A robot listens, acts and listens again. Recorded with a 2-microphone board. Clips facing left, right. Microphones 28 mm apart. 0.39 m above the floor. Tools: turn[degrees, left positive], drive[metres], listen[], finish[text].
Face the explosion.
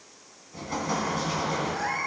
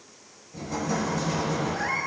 Thought: The explosion: about 35° left or 145° left.
Action: turn[35]
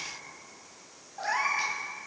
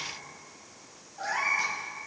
Action: listen[]
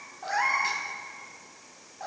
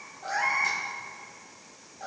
Action: finish[I heard an explosion, but can't make it out now. It was about straight ahead or 110° left.]